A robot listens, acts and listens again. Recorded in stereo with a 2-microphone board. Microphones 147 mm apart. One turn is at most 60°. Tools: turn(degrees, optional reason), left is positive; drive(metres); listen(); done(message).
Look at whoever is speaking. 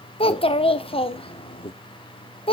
turn(degrees=40, reason="The child speaking: about 40° left or 140° left.")
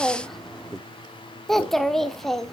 done("Facing the child speaking, under 1 m away.")